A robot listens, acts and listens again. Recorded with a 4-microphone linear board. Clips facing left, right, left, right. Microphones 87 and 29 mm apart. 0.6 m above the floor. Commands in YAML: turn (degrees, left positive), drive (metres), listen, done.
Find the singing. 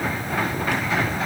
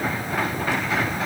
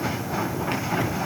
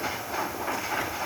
listen: true
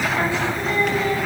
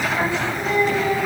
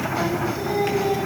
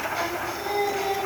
turn: -30
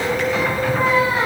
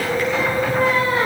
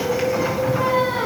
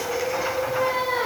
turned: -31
turn: 15
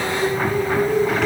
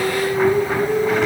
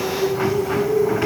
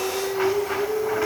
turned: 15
done: "Facing the singing, over 4 m away."